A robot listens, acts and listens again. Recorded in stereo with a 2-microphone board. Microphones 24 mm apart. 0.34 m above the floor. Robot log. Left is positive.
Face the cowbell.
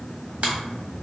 cmd idle
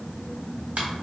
cmd idle
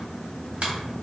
end: I can't make out a cowbell, only a finger snap.